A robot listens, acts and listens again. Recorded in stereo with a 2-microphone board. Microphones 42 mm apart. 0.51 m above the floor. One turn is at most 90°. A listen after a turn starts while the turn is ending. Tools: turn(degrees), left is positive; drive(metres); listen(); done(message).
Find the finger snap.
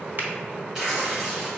listen()
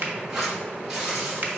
turn(degrees=-50)
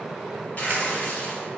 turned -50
listen()
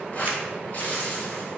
listen()
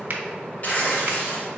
turn(degrees=-65)
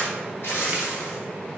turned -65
listen()
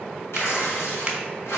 listen()
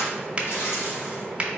turn(degrees=-30)
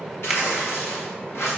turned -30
listen()
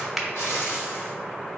done("Found it: a finger snap, straight ahead, under 1 m away.")